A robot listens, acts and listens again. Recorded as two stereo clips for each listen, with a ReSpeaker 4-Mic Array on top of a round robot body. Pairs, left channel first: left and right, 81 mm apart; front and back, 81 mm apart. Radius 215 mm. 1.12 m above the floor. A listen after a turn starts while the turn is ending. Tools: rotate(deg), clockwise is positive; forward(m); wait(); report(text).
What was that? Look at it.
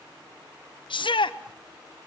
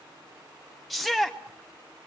rotate(-90)
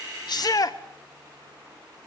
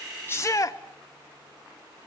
rotate(-50)
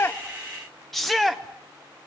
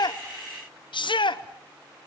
report("Found it: a shout, straight ahead.")